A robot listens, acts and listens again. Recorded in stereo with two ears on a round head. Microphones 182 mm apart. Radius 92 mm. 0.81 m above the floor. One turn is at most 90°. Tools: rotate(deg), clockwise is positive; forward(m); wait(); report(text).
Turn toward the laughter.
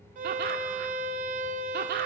rotate(45)
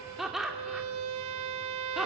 report("Facing the laughter, 2 to 4 m away.")